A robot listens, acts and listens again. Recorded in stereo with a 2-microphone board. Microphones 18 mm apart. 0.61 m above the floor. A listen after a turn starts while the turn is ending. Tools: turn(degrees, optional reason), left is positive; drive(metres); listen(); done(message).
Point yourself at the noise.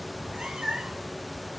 turn(degrees=-90)
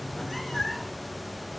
turn(degrees=10, reason="So it is at 10° left.")
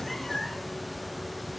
turn(degrees=15, reason="The cat meowing is now 15° left.")
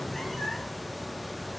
listen()
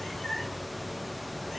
turn(degrees=20, reason="The cat meowing is now 20° left.")
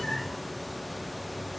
listen()
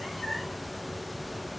listen()
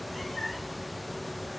done("Found it: a cat meowing, straight ahead.")